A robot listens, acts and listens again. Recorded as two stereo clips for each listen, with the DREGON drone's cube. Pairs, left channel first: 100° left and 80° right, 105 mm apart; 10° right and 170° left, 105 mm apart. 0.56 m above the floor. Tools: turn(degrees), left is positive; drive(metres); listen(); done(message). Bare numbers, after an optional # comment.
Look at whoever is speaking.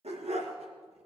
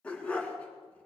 listen()
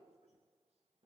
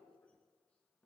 listen()
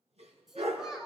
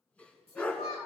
done("Facing the child speaking, over 4 m away.")